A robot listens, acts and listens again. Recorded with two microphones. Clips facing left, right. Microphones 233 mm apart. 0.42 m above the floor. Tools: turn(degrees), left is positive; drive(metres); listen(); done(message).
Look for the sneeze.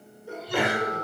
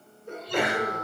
turn(degrees=30)
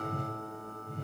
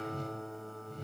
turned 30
listen()
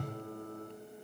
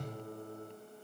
done("I heard a sneeze, but can't make it out now. It was about 25° right or 145° left.")